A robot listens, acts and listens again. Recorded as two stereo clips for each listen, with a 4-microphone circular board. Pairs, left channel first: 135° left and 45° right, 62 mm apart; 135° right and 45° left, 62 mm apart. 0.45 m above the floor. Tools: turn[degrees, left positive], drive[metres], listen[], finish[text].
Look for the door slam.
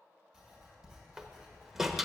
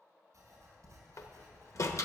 Thought: The door slam: 130° right.
Action: turn[-130]
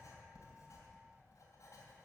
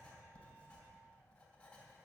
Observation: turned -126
Action: finish[I heard a door slam from this way, but can't make it out now.]